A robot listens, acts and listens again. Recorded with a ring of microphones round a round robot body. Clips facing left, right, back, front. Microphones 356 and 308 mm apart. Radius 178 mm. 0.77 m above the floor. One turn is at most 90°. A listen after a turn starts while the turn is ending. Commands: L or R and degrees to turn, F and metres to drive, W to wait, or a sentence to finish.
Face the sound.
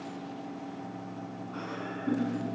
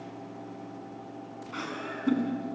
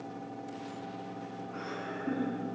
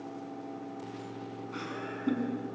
R50
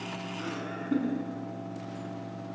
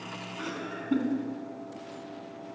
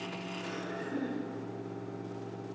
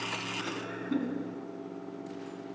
R15
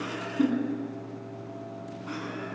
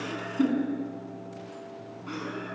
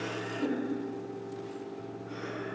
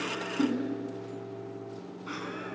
Found it: laughter, straight ahead, over 4 m away.